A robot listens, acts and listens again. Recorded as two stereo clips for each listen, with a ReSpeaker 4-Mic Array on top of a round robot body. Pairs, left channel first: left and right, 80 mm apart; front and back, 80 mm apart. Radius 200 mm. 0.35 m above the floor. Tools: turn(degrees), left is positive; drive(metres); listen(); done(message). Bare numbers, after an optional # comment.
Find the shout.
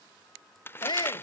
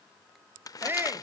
# The shout: 115° left.
turn(115)
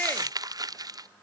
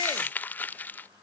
listen()
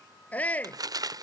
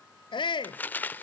# The shout is now 20° left.
turn(20)
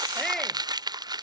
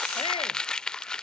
listen()
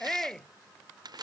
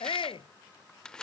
done("Found it: a shout, straight ahead.")